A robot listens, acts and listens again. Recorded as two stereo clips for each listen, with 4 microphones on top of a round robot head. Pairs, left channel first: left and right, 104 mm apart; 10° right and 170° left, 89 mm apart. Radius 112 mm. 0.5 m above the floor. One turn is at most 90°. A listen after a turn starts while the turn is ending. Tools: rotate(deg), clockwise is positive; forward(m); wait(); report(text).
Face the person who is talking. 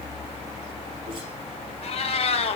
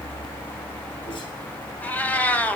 wait()
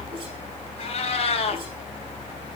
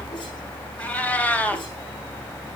wait()
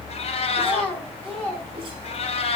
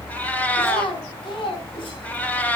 rotate(-10)
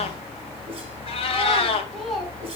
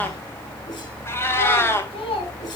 report("Found it: a child speaking, straight ahead, over 4 m away.")